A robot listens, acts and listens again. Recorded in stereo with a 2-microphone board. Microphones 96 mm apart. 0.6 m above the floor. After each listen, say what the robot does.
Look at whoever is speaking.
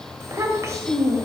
Turn 30° right.
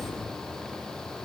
Keep listening.
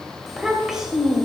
Found it: a child speaking, straight ahead, 1 to 2 m away.